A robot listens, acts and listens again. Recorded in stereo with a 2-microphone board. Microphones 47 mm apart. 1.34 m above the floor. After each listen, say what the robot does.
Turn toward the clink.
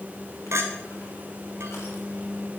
Turn 90° right.
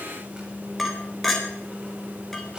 Facing the clink, 2 to 4 m away.